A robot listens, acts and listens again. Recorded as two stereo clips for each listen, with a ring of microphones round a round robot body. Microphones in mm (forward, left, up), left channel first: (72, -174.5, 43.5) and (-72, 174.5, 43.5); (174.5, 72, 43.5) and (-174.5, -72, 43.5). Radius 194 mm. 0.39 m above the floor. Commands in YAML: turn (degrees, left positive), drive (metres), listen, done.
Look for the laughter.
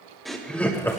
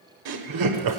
turn: -150
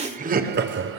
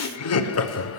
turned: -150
turn: 65
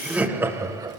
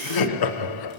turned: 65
turn: 35
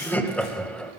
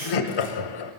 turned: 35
turn: 20
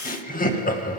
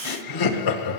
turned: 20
done: "Facing the laughter."